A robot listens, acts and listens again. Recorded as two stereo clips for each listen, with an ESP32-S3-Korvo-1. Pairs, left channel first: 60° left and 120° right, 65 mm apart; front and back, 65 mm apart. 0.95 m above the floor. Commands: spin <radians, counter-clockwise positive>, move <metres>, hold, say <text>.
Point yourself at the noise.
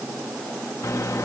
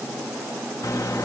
spin 0.52
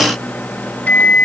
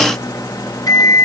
say Found it: a microwave, straight ahead.